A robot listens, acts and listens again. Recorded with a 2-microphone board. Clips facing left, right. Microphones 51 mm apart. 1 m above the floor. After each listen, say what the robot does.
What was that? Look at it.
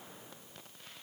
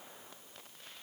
Keep listening.
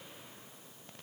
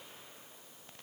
Keep listening.
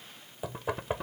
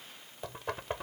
Turn 30° left.
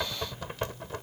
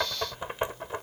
Turn 20° right.
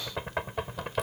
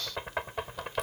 Found it: knocking, straight ahead.